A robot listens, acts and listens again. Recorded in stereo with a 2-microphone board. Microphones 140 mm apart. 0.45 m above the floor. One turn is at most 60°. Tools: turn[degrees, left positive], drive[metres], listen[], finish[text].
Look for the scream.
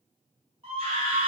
Thought: The scream: about 45° right or 135° right.
Action: turn[-45]
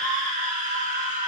Thought: So it is at 90° right.
Action: turn[-60]
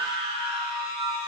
Thought: The scream is now 45° right.
Action: turn[-45]
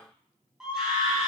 Action: finish[Facing the scream.]